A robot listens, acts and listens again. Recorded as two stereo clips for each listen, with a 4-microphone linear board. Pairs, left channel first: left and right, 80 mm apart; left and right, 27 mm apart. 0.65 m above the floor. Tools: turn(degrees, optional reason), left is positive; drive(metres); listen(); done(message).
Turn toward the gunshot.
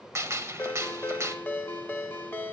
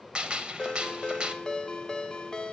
turn(degrees=-35, reason="The gunshot: about 35° right or 145° right.")
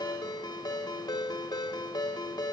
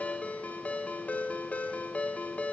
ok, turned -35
listen()
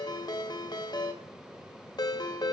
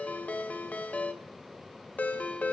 done("I heard a gunshot, but can't make it out now. It was about straight ahead or 110° right.")